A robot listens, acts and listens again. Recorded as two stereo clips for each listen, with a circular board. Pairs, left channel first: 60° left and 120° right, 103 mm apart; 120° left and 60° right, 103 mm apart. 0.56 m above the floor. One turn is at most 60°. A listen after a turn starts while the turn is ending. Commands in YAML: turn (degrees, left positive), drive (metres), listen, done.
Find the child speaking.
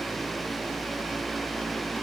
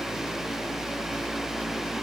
listen: true
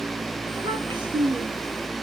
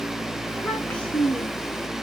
turn: -60
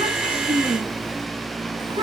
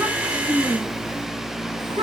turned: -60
turn: -60
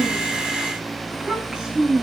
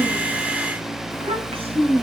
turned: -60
turn: -35
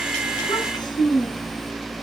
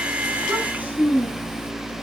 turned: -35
turn: 15
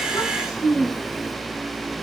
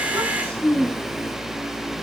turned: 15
done: "Found it: a child speaking, straight ahead, over 4 m away."